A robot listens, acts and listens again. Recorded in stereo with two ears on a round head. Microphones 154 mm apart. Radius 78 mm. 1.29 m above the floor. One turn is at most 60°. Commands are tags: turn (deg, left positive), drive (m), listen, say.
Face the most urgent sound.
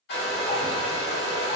<listen/>
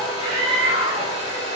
<turn deg="-30"/>
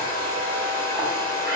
<listen/>
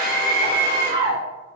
<turn deg="-60"/>
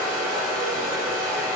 <turn deg="-60"/>
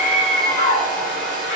<turn deg="40"/>
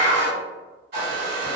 <turn deg="20"/>
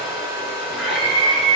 <say>Found it: a scream, straight ahead.</say>